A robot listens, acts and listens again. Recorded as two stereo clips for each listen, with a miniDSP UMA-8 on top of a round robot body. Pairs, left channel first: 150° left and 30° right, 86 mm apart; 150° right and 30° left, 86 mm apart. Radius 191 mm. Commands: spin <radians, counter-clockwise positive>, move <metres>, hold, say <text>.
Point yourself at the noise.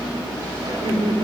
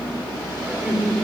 spin -0.96
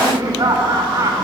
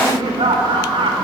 spin 0.26
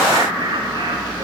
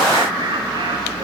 say Facing the laughter, over 4 m away.